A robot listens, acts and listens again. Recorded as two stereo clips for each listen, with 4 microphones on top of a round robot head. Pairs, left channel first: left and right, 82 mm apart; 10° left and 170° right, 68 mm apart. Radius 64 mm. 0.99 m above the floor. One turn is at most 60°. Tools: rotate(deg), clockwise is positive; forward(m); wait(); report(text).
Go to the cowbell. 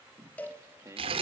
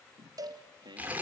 rotate(-60)
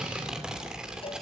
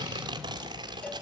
rotate(-60)
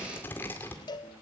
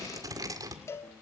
rotate(-60)
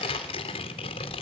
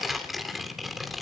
wait()
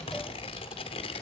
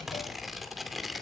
wait()
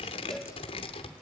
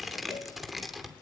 report("Facing where the cowbell came from. I can't hear it now. I did not reach it.")